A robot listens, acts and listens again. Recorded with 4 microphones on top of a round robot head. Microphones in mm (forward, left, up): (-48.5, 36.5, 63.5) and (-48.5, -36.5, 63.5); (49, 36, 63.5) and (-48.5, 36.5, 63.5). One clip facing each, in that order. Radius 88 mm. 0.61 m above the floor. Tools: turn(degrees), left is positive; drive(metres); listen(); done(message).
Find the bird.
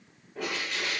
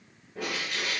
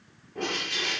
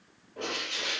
done("Found it: a bird, straight ahead.")